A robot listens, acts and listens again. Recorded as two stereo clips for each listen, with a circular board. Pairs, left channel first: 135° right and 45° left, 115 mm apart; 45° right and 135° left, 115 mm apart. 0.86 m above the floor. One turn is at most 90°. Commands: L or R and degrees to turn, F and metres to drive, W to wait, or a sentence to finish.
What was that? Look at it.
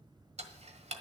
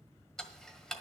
L40
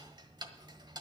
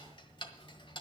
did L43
Facing the ticking.